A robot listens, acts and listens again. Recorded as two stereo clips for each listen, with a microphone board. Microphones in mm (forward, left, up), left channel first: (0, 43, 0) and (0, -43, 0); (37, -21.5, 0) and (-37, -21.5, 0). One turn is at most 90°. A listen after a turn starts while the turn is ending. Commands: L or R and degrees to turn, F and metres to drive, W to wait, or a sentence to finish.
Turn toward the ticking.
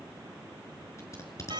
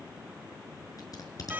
W
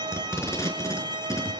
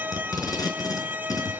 W
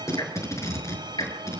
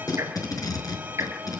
L90
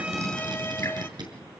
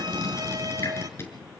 L35
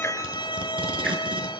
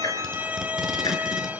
W
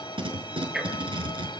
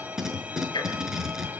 Found it: ticking, straight ahead.